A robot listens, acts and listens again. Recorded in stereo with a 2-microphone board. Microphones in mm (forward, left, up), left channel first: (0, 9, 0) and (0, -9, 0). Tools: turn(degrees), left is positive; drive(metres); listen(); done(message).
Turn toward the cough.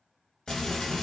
listen()
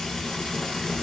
listen()
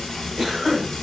turn(degrees=-30)
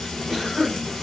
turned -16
done("Facing the cough, 1 to 2 m away.")